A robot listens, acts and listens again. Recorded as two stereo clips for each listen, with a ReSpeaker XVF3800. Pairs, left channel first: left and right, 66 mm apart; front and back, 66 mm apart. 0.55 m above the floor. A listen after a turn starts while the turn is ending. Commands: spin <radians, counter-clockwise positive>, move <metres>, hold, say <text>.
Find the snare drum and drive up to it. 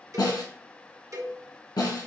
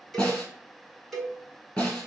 spin 1.40
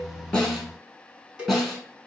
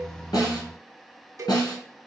move 1.0
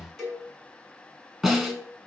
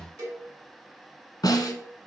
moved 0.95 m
move 1.0
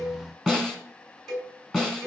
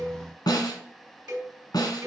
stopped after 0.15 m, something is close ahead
say Arrived at the snare drum, straight ahead.